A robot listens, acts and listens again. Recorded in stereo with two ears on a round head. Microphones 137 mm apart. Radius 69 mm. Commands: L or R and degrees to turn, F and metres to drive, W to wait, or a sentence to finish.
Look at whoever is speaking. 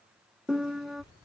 L30
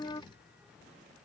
Found it: a child speaking, straight ahead.